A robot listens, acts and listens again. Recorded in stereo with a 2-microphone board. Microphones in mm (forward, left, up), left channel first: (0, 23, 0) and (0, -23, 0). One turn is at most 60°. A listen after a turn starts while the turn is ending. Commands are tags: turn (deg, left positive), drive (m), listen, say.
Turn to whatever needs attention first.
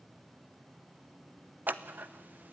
<listen/>
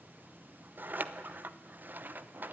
<listen/>
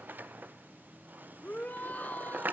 <turn deg="45"/>
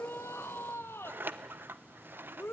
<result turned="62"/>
<turn deg="60"/>
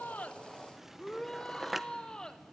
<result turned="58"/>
<turn deg="15"/>
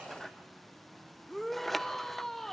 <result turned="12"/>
<say>Facing the shout.</say>